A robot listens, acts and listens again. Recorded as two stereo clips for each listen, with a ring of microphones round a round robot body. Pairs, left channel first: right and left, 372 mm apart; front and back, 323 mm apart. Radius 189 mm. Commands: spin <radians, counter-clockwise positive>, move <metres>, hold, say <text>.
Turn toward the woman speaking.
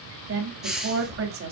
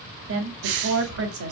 spin 2.44
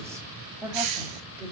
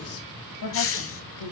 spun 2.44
spin 0.17
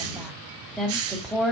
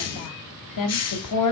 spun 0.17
say Facing the woman speaking, 2 to 4 m away.